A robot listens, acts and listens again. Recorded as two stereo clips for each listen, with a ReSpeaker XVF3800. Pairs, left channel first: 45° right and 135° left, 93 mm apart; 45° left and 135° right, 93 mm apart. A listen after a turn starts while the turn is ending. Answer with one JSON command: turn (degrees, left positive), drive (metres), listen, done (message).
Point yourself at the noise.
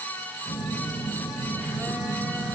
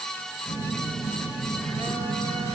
{"turn": -150}
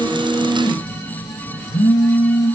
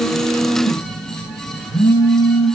{"done": "Facing the phone buzzing."}